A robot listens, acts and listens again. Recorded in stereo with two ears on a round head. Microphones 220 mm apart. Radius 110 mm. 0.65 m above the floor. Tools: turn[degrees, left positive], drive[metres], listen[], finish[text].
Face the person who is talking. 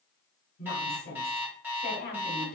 Thought: The woman speaking: about 40° left or 140° left.
Action: turn[40]
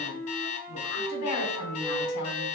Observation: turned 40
Thought: So it is at 100° left.
Action: turn[100]
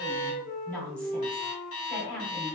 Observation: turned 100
Action: finish[Found it: a woman speaking, straight ahead.]